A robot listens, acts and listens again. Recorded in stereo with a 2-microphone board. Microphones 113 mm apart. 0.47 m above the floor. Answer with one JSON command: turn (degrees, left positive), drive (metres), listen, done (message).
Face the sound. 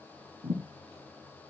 {"turn": -60}
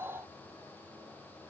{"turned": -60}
{"listen": true}
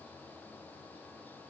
{"done": "I heard a thud, but can't make it out now. It was about straight ahead or 60° right."}